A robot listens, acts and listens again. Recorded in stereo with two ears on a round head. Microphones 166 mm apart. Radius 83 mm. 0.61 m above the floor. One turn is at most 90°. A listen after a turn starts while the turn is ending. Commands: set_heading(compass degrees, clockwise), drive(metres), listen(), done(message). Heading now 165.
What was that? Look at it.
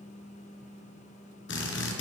set_heading(90)
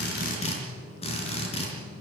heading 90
set_heading(60)
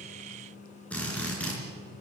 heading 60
done("Facing the drill, 2 to 4 m away.")